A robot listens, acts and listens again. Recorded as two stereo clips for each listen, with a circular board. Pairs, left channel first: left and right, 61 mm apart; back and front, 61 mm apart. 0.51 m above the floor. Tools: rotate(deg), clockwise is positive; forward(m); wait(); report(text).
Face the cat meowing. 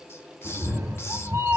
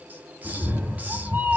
rotate(55)
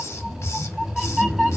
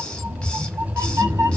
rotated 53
report("Found it: a cat meowing, straight ahead.")